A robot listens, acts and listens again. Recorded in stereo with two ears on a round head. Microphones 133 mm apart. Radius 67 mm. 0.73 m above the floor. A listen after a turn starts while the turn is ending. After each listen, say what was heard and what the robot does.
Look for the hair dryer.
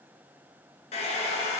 The hair dryer: about 50° left or 130° left. Turn 50° left.
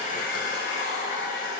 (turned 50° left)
So it is at 80° left. Turn 80° left.
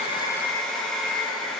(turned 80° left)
Found it: a hair dryer, straight ahead, 1 to 2 m away.